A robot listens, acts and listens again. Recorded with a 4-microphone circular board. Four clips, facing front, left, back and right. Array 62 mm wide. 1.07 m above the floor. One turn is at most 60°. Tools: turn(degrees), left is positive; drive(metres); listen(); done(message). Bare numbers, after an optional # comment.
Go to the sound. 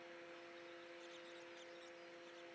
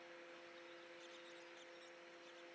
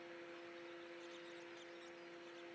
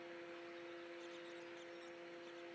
listen()
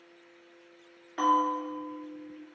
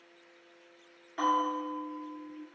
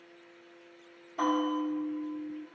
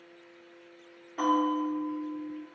# The bell: 20° left.
turn(20)
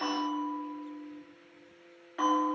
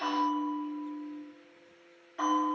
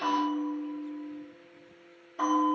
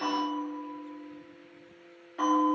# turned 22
drive(1.0)
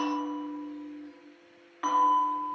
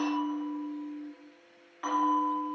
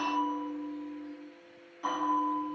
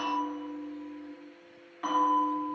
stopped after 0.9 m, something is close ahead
done("Arrived at the bell, straight ahead.")